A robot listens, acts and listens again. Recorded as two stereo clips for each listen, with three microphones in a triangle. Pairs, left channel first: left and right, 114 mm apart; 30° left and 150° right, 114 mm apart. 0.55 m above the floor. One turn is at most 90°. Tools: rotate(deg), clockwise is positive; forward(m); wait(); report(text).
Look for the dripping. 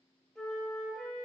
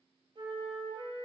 wait()
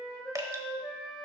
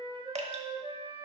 rotate(90)
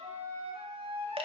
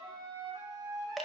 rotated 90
rotate(60)
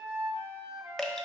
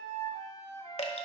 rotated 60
report("Facing the dripping.")